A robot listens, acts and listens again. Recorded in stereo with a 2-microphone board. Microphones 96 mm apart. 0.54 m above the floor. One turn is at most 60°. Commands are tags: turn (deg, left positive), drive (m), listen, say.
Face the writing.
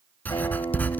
<turn deg="15"/>
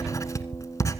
<turn deg="60"/>
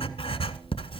<turn deg="60"/>
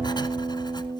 <turn deg="50"/>
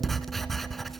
<say>Facing the writing.</say>